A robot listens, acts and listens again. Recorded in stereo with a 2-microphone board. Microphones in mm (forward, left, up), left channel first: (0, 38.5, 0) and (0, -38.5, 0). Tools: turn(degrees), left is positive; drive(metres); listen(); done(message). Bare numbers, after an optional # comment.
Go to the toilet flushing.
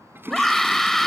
# The toilet flushing: about 30° right or 150° right.
turn(-30)
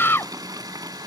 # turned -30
# So it is at 125° right.
turn(-125)
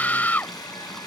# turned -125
listen()
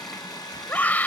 listen()
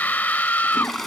drive(1.0)
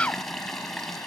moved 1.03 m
drive(1.0)
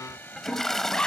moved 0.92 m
drive(1.0)
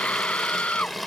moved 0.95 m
drive(1.0)
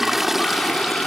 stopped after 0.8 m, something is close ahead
done("Arrived at the toilet flushing, straight ahead.")